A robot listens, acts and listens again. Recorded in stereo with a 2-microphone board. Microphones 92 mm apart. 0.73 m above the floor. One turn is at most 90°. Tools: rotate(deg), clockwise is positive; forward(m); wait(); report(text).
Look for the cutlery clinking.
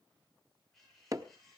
rotate(-30)
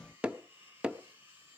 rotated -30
rotate(25)
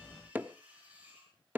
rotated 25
rotate(15)
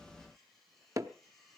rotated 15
report("Facing the cutlery clinking.")